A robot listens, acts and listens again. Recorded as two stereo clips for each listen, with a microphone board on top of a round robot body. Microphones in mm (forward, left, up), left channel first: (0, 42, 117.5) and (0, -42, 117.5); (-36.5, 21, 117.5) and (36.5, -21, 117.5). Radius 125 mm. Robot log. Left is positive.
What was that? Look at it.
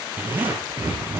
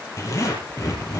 note: The zipper: 155° right.
cmd yaw -155
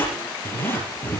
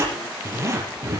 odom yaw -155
note: The zipper is now 25° left.
cmd yaw +25
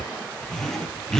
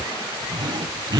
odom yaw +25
note: The zipper is now 10° left.
cmd yaw +10
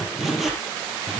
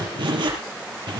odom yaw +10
end: Facing the zipper.